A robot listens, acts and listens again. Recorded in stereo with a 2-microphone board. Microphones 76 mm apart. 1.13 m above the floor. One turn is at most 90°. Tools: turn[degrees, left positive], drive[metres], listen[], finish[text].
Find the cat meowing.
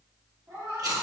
Thought: The cat meowing: about 45° right or 135° right.
Action: turn[-45]
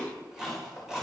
Action: listen[]
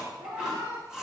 Thought: So it is at 85° right.
Action: turn[-85]
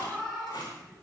Action: finish[Facing the cat meowing, over 4 m away.]